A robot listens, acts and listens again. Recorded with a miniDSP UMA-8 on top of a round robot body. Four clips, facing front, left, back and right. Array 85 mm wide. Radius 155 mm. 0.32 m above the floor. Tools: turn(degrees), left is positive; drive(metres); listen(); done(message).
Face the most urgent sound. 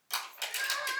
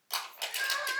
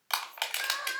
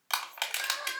turn(degrees=45)
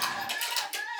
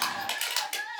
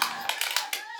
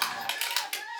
turn(degrees=10)
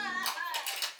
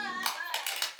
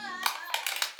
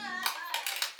done("Facing the crying.")